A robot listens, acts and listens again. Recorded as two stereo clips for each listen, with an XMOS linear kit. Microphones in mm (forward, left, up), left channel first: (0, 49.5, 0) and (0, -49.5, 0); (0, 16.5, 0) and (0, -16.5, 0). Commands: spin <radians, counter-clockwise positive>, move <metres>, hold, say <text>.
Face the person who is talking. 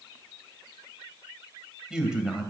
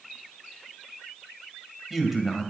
spin -0.52
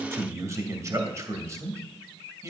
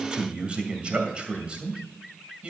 spin -2.44
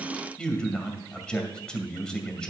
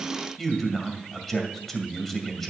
spin 0.17
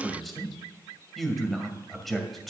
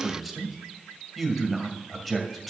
say Found it: a man speaking, straight ahead.